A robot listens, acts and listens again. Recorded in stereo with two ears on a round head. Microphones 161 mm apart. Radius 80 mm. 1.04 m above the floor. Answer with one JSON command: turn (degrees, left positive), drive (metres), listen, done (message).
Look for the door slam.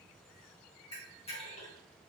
{"listen": true}
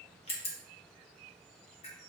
{"listen": true}
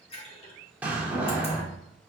{"turn": -30}
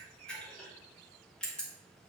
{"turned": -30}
{"listen": true}
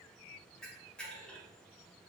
{"done": "I heard a door slam, but can't make it out now. It was about 20° left or 140° right."}